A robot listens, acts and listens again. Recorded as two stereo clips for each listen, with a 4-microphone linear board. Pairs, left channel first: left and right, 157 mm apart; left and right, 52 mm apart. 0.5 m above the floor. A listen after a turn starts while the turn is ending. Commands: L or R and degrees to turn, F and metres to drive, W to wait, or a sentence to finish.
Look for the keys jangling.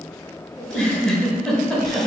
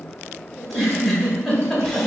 W
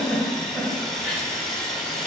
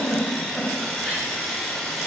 W
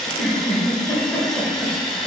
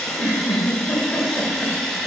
I can't make out keys jangling, only sawing and a giggle.